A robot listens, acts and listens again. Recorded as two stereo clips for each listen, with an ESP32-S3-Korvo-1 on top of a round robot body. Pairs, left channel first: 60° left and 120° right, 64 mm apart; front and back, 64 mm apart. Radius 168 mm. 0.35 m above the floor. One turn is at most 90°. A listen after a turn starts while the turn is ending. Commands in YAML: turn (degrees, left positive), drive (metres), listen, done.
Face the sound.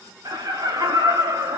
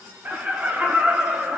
turn: -90
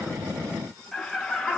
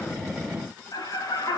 turn: -20
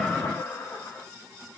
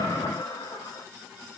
done: "Facing the laughter."